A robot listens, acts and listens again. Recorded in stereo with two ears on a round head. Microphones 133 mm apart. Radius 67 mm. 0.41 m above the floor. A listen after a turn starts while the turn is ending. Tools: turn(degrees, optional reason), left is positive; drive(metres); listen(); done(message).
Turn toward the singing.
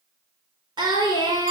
turn(degrees=-30, reason="The singing: about 30° right or 150° right.")
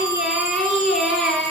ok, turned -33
done("Facing the singing.")